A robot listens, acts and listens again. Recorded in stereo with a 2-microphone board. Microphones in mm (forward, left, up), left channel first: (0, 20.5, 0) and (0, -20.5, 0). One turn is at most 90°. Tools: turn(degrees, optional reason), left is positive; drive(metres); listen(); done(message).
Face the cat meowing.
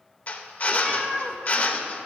turn(degrees=30)
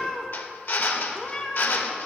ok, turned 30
turn(degrees=90, reason="So it is at 155° left.")
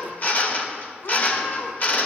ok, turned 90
turn(degrees=90, reason="The cat meowing is now 95° left.")
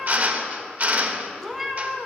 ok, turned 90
done("Found it: a cat meowing, straight ahead, 1 to 2 m away.")